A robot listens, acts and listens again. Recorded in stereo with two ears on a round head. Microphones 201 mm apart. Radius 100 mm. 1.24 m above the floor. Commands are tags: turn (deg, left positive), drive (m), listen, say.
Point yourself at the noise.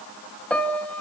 <turn deg="30"/>
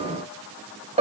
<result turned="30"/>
<turn deg="-25"/>
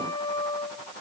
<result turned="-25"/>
<turn deg="20"/>
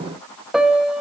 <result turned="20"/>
<say>Facing the piano.</say>